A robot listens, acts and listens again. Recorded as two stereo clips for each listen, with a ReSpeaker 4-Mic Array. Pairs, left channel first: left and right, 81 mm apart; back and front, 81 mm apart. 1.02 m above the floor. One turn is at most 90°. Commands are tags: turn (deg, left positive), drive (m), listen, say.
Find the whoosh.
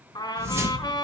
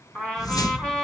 <turn deg="-90"/>
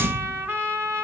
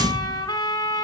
<turn deg="-35"/>
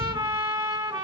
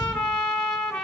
<listen/>
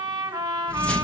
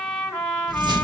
<turn deg="15"/>
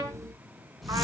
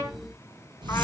<say>Found it: a whoosh, straight ahead, under 1 m away.</say>